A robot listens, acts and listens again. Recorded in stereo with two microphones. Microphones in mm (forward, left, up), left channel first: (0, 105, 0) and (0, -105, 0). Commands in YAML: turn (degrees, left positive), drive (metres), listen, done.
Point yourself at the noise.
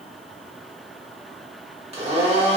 turn: -30
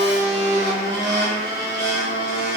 turn: -120
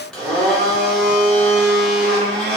done: "Facing the blender, 1 to 2 m away."